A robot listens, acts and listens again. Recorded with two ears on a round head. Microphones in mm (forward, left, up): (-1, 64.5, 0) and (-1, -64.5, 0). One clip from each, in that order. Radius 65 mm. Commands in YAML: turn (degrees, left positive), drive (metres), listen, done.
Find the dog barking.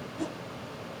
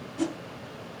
listen: true
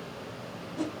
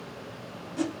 listen: true
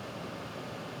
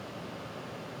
done: "I can't make out a dog barking, only a whoosh."